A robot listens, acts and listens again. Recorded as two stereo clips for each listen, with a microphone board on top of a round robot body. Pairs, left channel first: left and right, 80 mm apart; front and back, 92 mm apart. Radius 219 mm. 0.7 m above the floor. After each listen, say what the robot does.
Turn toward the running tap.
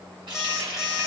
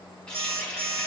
Turn 80° right.
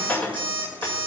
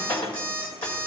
Turn 15° left.
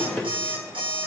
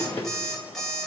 Keep listening.
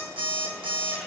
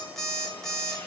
Keep listening.
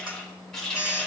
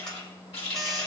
Turn 10° left.
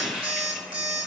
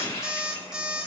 Found it: a running tap, straight ahead, 2 to 4 m away.